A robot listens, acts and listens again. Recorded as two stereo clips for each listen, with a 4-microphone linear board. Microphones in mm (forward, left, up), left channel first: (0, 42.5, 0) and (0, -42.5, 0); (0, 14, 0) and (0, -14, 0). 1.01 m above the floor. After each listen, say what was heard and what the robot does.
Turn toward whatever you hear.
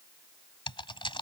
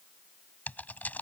The typing on a keyboard: about 65° left or 115° left. Turn 65° left.
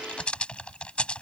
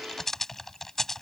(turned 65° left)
So it is at 15° left. Turn 15° left.
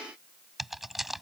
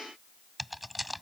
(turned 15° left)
Found it: typing on a keyboard, straight ahead.